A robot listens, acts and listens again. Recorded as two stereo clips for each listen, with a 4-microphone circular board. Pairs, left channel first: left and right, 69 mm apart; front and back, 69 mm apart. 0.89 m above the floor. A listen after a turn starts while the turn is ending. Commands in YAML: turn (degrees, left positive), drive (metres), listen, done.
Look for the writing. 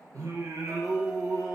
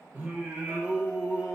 listen: true
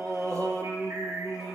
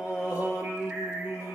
listen: true
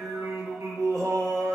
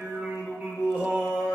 done: "I can't make out writing to turn to."